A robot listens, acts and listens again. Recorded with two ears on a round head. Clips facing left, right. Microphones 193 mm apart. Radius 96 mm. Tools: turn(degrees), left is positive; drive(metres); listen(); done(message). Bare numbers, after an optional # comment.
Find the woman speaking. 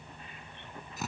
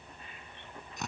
listen()
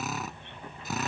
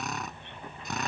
listen()
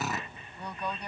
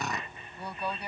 turn(-30)
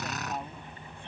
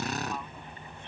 # So it is at 25° left.
turn(25)
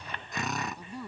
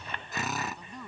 # The woman speaking is now 10° left.
turn(10)
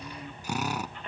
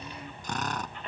done("Found it: a woman speaking, straight ahead.")